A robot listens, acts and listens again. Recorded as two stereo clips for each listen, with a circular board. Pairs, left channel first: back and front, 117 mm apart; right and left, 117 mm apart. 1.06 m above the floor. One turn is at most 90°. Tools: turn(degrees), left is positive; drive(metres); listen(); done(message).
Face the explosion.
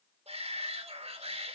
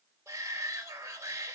listen()
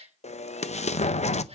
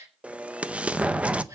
turn(degrees=90)
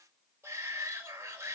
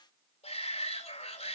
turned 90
turn(degrees=80)
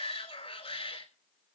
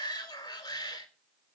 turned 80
done("I heard an explosion from this way, but can't make it out now.")